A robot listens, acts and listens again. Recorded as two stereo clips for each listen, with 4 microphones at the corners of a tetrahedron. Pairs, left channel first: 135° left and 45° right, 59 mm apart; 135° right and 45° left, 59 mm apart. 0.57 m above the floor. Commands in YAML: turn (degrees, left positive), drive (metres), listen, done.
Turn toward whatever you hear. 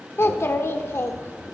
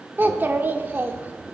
turn: 95
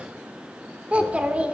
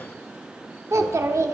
turn: 20
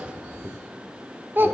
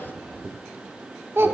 done: "Facing the child speaking, under 1 m away."